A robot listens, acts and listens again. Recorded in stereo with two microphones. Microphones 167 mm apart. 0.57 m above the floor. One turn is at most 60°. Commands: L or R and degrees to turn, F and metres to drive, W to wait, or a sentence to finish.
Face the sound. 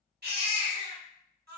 R60
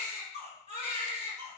R40
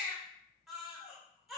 Facing the baby crying.